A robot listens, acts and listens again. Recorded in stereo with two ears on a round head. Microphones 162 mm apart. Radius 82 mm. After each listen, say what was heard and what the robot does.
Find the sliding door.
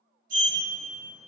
The sliding door: about 45° right or 135° right. Turn 45° right.
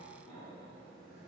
Keep listening.
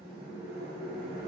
Facing the sliding door.